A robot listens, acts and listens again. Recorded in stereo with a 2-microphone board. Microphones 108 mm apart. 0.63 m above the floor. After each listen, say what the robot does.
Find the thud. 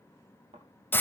Turn 90° right.
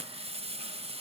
Facing where the thud came from. I can't hear it now.